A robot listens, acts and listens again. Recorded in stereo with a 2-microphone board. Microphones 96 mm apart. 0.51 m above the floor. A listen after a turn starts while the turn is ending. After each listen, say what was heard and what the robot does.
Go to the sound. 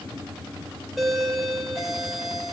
Turn 30° left.
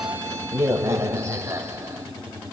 So it is at 30° right. Turn 30° right.
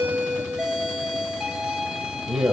Drive 1.0 m forward.
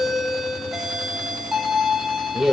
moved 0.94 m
Drive 1.0 m forward.
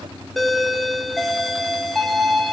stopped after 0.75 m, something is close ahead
I am next to the doorbell.